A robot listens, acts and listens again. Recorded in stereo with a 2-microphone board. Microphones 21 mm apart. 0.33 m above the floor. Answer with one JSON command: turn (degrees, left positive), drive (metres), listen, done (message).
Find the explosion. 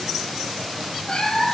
{"listen": true}
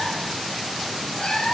{"listen": true}
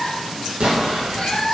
{"turn": -55}
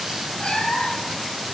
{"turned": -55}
{"listen": true}
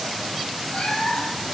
{"done": "I heard an explosion, but can't make it out now. It was about straight ahead or 70° right."}